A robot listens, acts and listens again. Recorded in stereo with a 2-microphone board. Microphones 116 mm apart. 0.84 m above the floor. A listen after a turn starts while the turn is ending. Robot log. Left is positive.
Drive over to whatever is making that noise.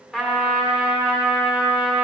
cmd yaw -30
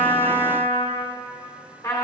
note: So it is at 25° left.
cmd yaw +25
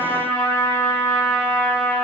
note: The trumpet is now 15° left.
cmd yaw +15
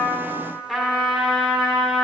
cmd fwd 1.0
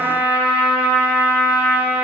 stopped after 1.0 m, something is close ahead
note: The trumpet is now 15° right.
cmd yaw -15
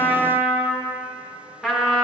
end: I am next to the trumpet.